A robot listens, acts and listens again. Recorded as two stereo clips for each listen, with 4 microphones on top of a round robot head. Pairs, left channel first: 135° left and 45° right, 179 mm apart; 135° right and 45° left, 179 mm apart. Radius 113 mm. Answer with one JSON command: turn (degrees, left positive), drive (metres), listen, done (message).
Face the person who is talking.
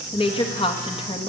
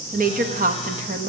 {"turn": 75}
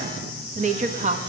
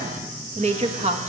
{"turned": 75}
{"done": "Facing the woman speaking, 1 to 2 m away."}